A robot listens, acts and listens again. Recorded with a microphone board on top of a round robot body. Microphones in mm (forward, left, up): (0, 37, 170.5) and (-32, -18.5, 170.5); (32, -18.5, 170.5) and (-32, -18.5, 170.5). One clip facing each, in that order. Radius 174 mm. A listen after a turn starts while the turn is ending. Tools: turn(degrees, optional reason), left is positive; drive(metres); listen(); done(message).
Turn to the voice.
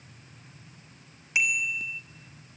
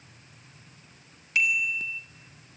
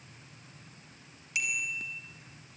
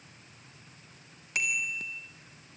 listen()
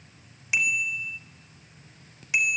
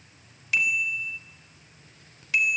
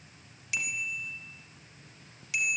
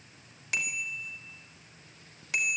listen()
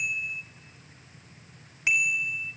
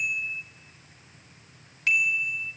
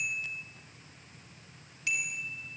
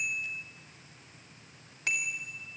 done("I can't make out anyone speaking, only a bicycle bell.")